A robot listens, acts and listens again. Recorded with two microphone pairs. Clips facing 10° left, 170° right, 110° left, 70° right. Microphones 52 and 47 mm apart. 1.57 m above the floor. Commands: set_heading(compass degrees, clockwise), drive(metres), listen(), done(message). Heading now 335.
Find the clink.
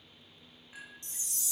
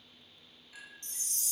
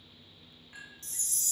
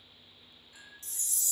set_heading(265)
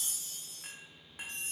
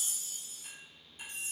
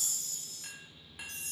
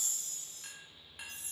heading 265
set_heading(240)
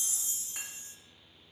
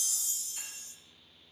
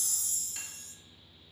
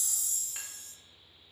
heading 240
listen()
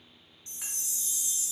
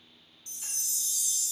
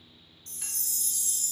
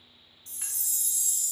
listen()
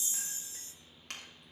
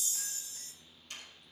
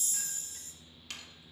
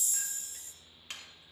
done("Found it: a clink, straight ahead.")